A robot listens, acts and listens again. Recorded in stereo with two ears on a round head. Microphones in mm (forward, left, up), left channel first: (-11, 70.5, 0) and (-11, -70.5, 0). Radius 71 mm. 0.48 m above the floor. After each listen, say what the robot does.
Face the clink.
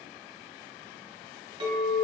Turn 30° right.
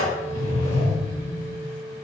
Turn 115° right.
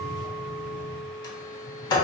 Found it: a clink, straight ahead.